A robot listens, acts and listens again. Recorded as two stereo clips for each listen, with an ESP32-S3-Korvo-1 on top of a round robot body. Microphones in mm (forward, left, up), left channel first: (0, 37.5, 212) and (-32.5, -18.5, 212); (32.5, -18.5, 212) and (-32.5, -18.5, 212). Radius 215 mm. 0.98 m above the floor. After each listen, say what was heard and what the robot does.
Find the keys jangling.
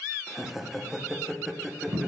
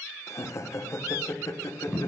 Keep listening.
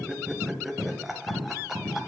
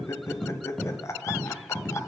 Keep listening.
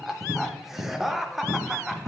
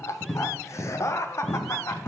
I can't make out keys jangling to turn to.